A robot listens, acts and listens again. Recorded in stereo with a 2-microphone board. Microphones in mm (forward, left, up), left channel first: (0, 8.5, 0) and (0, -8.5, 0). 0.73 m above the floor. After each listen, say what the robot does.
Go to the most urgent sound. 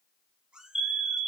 Turn 25° right.
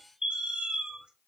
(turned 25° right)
Turn 130° right.
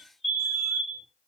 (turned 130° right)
Drive 1.0 m forward.
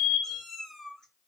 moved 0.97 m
Turn 15° right.
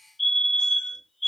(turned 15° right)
Drive 1.0 m forward.
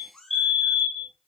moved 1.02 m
Drive 1.0 m forward.
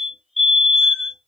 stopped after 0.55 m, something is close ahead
Turn 10° right.
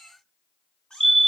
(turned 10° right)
I am next to the fire alarm.